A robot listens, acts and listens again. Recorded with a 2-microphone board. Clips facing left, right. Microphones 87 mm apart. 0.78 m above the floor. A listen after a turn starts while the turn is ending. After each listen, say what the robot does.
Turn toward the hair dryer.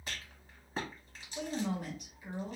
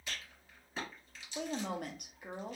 Keep listening.
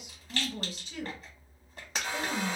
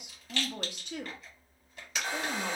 Turn 25° right.
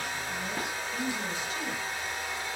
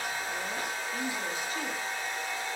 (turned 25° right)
Found it: a hair dryer, straight ahead.